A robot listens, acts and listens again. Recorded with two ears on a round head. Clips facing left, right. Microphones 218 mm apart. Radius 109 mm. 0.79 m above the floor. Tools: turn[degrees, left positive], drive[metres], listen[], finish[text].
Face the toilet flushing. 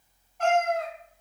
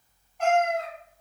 Action: listen[]
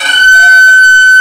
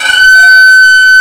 Action: listen[]
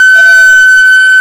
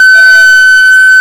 Action: finish[I can't make out a toilet flushing, only a violin and a cat meowing.]